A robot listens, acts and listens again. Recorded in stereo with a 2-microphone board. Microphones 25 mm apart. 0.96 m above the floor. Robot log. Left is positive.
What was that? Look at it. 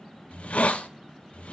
note: The hiss: about 75° left or 105° left.
cmd yaw +75
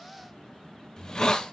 note: So it is at 30° left.
cmd yaw +30
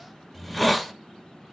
end: Found it: a hiss, straight ahead.